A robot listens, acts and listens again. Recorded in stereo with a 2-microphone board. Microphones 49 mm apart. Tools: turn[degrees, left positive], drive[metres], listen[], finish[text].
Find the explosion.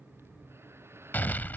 Thought: The explosion: about 40° left or 140° left.
Action: turn[40]
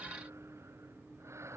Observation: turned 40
Action: listen[]
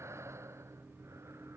Action: finish[I heard an explosion, but can't make it out now. It was about straight ahead or 100° left.]